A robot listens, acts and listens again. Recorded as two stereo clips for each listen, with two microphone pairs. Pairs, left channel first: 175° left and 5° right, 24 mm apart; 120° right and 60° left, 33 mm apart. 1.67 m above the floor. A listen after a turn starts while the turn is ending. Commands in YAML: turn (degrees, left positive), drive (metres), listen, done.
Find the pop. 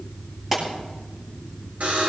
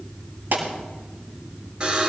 turn: 65
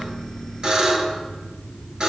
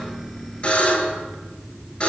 done: "I heard a pop from this way, but can't make it out now."